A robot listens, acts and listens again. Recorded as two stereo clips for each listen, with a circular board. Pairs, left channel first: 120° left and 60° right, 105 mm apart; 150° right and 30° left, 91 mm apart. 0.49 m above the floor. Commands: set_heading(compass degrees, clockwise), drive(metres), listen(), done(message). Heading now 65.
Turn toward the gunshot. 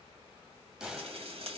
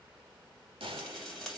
set_heading(45)
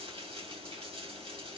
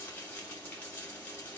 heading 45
done("I heard a gunshot from this way, but can't make it out now.")